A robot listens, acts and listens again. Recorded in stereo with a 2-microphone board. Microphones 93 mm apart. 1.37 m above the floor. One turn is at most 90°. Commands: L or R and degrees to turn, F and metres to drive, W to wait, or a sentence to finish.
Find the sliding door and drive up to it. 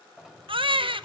R30
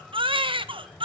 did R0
R30
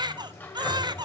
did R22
L20
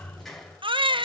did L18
F1.0
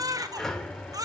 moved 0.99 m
F1.0
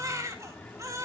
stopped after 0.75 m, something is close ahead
L15
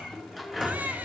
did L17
I am next to the sliding door.